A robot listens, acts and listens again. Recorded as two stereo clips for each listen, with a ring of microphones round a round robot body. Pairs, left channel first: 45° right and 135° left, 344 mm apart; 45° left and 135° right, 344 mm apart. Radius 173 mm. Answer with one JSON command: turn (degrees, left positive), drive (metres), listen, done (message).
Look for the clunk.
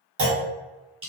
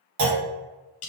{"turn": -170}
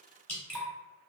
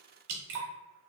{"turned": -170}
{"done": "Facing where the clunk came from. I can't hear it now."}